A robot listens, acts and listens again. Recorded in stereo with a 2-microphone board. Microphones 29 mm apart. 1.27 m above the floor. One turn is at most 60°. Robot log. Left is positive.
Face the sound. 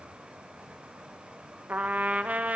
note: The trumpet: about 65° right or 115° right.
cmd yaw -60
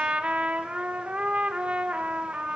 note: So it is at 50° right.
cmd yaw -50
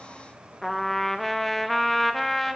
end: Found it: a trumpet, straight ahead.